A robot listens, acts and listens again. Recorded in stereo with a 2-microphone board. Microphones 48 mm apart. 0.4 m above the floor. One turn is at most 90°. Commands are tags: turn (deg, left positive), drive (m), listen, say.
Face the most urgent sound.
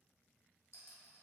<listen/>
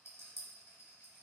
<listen/>
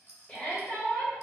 <turn deg="20"/>
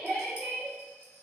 <say>Found it: a shout, straight ahead.</say>